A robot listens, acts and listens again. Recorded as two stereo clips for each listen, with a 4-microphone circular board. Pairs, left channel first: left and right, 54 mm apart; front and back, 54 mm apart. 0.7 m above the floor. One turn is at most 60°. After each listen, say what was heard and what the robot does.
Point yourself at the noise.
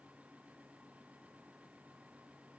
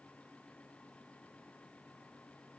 Keep listening.
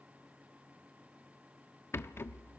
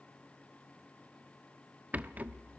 The rattle: 120° left. Turn 60° left.
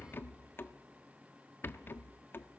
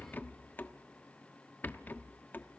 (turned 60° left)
The rattle is now 50° left. Turn 50° left.
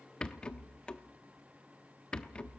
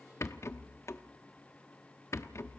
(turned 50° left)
The rattle is now 20° left. Turn 20° left.
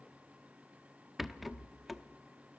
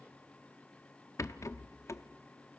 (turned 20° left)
Found it: a rattle, straight ahead, under 1 m away.